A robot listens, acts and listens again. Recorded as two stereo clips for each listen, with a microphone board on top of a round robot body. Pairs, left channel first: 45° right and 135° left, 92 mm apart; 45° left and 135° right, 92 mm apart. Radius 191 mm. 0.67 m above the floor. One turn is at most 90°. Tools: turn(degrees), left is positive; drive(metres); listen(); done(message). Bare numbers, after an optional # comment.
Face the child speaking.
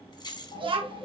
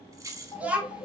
# The child speaking: 150° left.
turn(90)
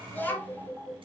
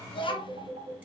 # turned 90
# The child speaking is now 25° left.
turn(25)
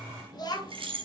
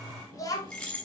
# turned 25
done("Facing the child speaking, 1 to 2 m away.")